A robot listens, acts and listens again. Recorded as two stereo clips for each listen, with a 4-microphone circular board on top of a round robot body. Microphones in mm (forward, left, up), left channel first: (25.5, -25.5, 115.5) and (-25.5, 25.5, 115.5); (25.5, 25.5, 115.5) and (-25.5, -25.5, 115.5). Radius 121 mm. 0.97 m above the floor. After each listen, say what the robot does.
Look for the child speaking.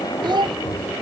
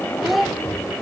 Turn 135° left.
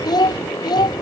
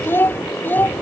Turn 20° right.
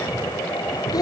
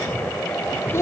Turn 10° right.
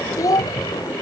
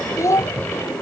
Found it: a child speaking, straight ahead.